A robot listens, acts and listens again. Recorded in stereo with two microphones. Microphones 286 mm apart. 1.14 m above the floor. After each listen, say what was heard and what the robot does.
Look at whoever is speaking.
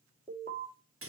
Keep listening.
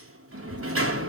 Turn 90° left.
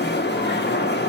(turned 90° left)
Keep listening.
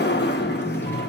Keep listening.
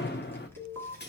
The child speaking is now 10° left. Turn 10° left.
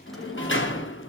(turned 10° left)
Facing the child speaking.